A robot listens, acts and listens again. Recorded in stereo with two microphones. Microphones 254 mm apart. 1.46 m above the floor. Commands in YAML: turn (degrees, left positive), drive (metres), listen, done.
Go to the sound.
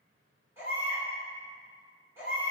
turn: -30
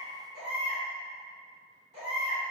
turn: -140
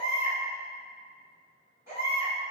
turn: -10
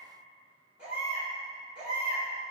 drive: 1.0
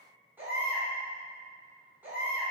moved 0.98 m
turn: -10
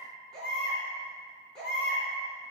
drive: 1.0
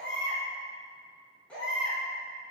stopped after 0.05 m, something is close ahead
done: "Arrived at the baby crying, straight ahead."